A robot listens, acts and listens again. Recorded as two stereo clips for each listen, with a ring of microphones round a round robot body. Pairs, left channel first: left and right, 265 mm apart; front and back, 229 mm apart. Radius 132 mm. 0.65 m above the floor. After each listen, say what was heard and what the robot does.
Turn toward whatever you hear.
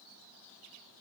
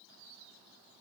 Keep listening.
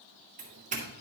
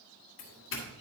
The doorbell: 30° right. Turn 30° right.
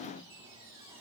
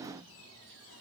Keep listening.
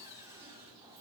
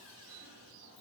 Keep listening.
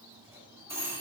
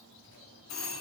The doorbell is now 10° right. Turn 10° right.
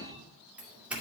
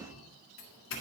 Facing the doorbell, 1 to 2 m away.